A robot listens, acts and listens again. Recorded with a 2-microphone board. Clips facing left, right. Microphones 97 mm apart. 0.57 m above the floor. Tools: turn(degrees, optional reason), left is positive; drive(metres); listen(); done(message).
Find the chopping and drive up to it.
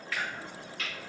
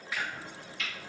turn(degrees=60, reason="The chopping: about 60° left or 120° left.")
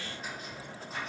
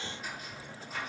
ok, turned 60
turn(degrees=40, reason="So it is at 40° left.")
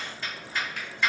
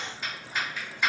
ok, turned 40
turn(degrees=-15, reason="The chopping is now 15° right.")
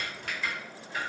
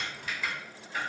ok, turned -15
drive(metres=1.0)
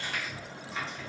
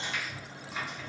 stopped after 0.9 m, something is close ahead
turn(degrees=-10, reason="The chopping is now 10° right.")
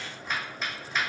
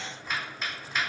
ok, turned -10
done("I am next to the chopping.")